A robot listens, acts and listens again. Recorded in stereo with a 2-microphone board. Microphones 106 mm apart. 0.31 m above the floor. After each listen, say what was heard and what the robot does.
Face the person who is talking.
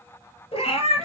Keep listening.
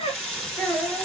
Turn 30° left.
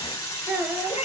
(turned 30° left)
So it is at 20° right. Turn 20° right.
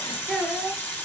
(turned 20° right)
Found it: a child speaking, straight ahead, 2 to 4 m away.